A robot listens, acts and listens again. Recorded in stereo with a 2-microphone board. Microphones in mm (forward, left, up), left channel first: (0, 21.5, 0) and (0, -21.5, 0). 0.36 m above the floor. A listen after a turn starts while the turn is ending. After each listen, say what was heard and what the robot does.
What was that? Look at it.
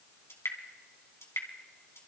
The dripping: about 70° left or 110° left. Turn 70° left.
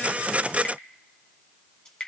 So it is at 20° left. Turn 20° left.
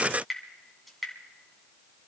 Found it: dripping, straight ahead.